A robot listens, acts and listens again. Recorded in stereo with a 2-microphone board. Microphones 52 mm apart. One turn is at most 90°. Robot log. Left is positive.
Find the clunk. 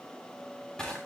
cmd idle
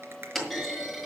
cmd yaw +30
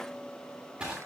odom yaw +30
cmd idle
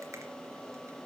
end: I heard a clunk, but can't make it out now. It was about 25° right or 145° left.